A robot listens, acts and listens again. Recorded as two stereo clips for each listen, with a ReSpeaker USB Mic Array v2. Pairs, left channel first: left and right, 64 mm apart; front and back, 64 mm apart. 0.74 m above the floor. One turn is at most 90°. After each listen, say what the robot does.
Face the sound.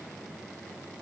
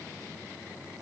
Keep listening.
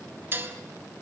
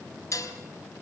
Turn 40° right.
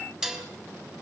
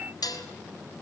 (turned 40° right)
Turn 10° right.
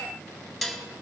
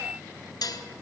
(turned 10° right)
Found it: dishes clattering, straight ahead, 2 to 4 m away.